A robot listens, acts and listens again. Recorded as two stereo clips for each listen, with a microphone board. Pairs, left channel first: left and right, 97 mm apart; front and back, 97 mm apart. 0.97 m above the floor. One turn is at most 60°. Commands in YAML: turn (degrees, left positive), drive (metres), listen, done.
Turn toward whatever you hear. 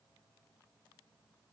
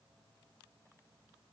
listen: true
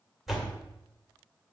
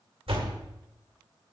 turn: 60
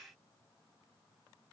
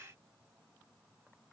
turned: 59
turn: 60
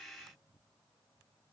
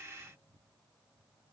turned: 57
turn: 60
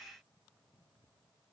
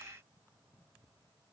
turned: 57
turn: 10
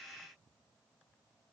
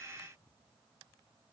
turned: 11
done: "I heard a door slam from this way, but can't make it out now."